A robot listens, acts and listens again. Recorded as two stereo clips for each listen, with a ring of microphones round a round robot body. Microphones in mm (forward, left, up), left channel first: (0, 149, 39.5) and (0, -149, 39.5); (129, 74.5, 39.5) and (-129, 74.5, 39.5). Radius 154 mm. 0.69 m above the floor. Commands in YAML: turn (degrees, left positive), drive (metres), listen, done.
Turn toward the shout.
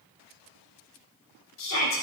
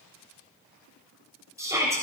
turn: 105
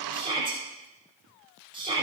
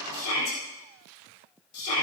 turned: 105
turn: -20
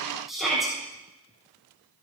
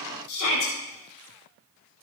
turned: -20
done: "Facing the shout."